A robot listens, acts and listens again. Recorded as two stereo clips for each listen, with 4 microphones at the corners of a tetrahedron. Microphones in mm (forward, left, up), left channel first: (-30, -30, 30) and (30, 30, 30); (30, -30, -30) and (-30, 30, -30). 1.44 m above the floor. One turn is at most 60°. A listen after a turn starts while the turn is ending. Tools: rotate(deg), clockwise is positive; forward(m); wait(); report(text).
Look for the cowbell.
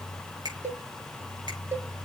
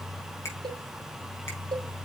rotate(-60)
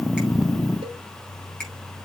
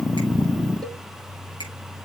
rotate(-45)
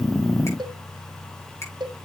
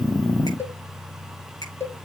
rotate(-15)
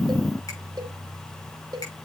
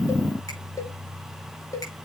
report("Facing the cowbell, 1 to 2 m away.")